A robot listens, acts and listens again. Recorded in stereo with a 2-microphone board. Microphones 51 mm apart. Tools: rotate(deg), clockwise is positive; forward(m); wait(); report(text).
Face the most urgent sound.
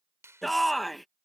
rotate(-30)
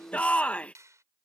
rotate(-150)
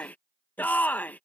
rotate(-35)
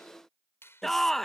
report("Facing the shout.")